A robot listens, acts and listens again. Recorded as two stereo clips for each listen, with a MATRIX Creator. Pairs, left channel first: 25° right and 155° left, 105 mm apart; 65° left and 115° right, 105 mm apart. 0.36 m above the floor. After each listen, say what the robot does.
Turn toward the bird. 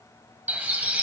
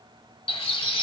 Turn 85° left.
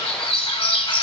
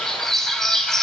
Turn 20° right.
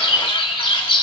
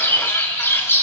Facing the bird.